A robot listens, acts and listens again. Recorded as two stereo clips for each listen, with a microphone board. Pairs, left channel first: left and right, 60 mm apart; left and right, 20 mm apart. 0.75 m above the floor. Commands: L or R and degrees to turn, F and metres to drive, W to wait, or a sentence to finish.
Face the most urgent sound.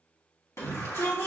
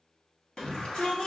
L50
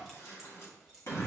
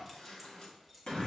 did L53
L65
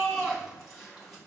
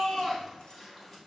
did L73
Found it: a shout, straight ahead.